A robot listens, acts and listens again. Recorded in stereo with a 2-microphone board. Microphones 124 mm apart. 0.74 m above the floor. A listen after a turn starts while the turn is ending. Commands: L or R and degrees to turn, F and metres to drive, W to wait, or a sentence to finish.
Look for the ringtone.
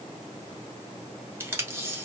W
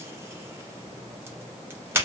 W
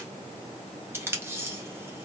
I can't make out a ringtone, only tape being pulled.